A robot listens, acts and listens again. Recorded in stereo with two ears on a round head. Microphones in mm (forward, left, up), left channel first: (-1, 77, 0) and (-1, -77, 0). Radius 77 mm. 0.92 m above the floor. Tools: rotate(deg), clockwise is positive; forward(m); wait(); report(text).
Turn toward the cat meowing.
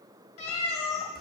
rotate(-40)
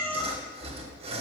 report("Found it: a cat meowing, straight ahead, 1 to 2 m away.")